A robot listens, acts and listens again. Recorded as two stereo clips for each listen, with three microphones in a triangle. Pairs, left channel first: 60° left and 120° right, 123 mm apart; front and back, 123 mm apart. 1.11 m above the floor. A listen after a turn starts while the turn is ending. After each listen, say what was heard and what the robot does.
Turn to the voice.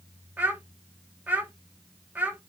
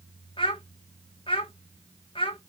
The child speaking: 40° right. Turn 40° right.
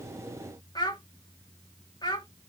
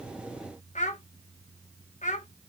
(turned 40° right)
Found it: a child speaking, straight ahead.